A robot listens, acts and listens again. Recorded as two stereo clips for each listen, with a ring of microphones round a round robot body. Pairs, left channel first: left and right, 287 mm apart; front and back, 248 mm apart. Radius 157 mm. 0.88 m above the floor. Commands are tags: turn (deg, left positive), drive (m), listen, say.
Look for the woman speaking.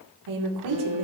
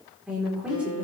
<turn deg="-95"/>
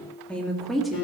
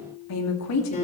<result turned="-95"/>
<say>Facing the woman speaking, 1 to 2 m away.</say>